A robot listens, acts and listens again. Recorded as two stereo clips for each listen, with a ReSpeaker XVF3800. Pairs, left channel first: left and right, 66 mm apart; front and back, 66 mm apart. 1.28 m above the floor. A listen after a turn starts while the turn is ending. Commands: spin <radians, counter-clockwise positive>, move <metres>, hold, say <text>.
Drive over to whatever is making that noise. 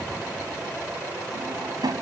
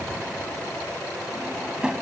spin -1.83
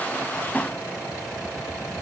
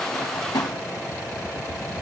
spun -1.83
spin 0.35
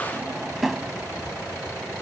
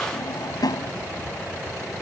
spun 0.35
move 1.0
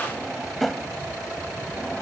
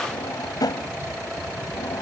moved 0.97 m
move 1.0
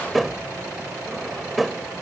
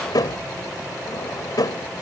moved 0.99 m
move 1.0
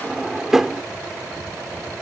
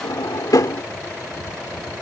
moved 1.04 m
move 1.0
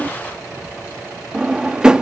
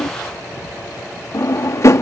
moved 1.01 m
spin -0.26
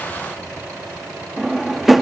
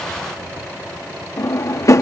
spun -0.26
move 1.0
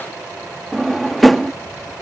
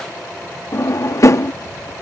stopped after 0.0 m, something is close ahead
say I am next to the drawer.